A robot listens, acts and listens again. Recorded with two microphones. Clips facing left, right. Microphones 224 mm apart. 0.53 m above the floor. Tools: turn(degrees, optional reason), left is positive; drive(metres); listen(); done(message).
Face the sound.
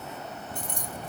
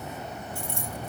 turn(degrees=15, reason="The keys jangling: about 15° left or 165° left.")
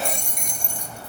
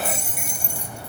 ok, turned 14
turn(degrees=-30)
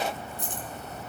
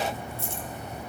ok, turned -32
turn(degrees=15, reason="So it is at 15° left.")
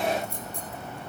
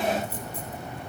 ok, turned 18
done("Facing the keys jangling, 2 to 4 m away.")